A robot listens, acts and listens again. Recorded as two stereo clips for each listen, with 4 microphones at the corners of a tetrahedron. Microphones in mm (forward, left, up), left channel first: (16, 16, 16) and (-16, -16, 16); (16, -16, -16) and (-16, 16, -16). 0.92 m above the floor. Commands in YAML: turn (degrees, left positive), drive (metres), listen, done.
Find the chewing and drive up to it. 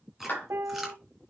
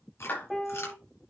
turn: -50
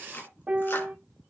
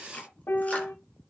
turn: 10
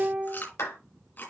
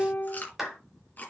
drive: 1.0
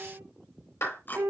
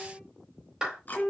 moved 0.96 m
drive: 1.0
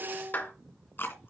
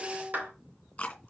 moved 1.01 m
turn: 15
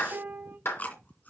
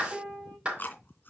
drive: 1.0
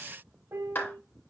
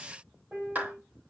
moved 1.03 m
listen: true
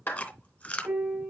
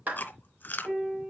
drive: 1.0
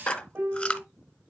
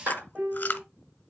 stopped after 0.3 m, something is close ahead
turn: -10
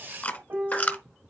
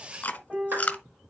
done: "Arrived at the chewing, straight ahead."